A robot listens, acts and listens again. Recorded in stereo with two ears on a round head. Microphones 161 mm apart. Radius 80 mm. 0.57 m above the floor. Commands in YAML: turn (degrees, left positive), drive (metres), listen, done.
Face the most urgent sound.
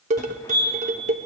turn: 25
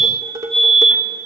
done: "Facing the fire alarm, 2 to 4 m away."